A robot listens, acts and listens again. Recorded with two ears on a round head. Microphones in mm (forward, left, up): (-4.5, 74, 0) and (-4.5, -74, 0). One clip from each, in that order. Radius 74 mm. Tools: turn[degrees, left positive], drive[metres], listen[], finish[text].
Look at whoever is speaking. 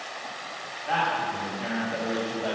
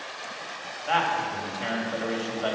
Thought: The man speaking: about 40° right or 140° right.
Action: turn[-40]
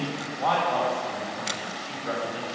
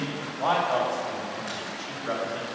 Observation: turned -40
Action: finish[Found it: a man speaking, straight ahead.]